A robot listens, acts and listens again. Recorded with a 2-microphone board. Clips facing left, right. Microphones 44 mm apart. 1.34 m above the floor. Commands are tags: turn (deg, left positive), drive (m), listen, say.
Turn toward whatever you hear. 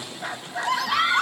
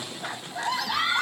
<turn deg="65"/>
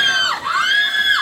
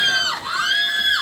<turn deg="50"/>
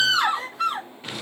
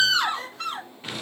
<turn deg="10"/>
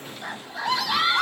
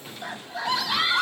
<say>Found it: a scream, straight ahead.</say>